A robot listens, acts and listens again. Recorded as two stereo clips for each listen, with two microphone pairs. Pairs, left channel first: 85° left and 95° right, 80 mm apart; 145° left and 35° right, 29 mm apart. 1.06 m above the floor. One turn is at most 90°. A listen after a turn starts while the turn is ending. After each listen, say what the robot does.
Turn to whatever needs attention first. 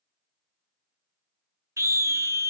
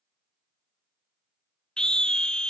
Turn 90° right.
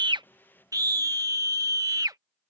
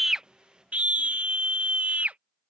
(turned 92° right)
Turn 60° right.
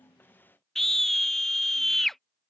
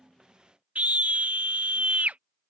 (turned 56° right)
Found it: a scream, straight ahead.